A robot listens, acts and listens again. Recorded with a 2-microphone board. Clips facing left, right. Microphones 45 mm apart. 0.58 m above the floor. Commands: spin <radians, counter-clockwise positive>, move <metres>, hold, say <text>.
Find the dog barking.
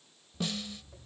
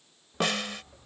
spin -0.79
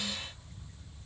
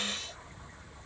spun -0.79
spin -1.57
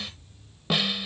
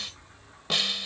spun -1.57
spin -0.61
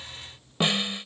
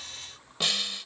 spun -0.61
spin -0.26
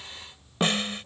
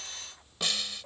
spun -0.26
say Facing the dog barking.